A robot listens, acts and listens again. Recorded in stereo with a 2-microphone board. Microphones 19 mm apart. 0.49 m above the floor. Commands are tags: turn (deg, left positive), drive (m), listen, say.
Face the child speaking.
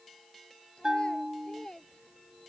<turn deg="65"/>
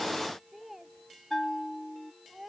<turn deg="-15"/>
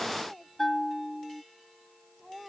<say>Found it: a child speaking, straight ahead.</say>